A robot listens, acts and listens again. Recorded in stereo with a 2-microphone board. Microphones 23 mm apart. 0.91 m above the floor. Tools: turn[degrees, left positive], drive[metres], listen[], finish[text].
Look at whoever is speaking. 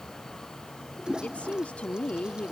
Action: turn[90]
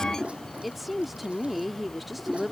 Action: finish[Facing the woman speaking.]